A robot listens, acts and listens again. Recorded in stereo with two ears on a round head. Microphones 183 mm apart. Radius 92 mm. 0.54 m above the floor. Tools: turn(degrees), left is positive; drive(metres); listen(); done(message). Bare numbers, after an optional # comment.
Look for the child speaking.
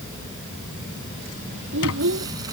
# The child speaking: about 65° right or 115° right.
turn(-65)
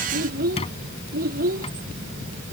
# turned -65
# So it is at 45° right.
turn(-45)
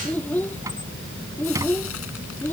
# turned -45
# The child speaking is now 10° left.
turn(10)
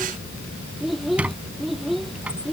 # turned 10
done("Facing the child speaking.")